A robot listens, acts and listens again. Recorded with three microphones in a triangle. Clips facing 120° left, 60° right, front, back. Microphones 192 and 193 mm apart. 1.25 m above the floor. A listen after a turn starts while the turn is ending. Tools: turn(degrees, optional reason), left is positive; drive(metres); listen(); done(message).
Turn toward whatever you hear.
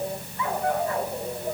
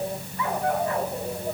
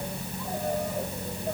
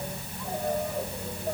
listen()
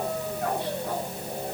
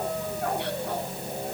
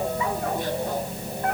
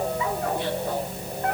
listen()
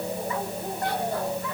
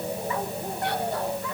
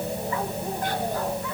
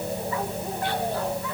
done("I can't make out anything.")